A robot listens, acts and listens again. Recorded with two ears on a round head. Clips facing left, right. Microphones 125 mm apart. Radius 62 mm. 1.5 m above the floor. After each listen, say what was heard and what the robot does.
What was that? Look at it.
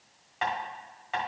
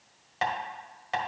The tapping: about 40° right or 140° right. Turn 40° right.
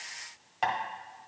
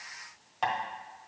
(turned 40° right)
Facing the tapping, 1 to 2 m away.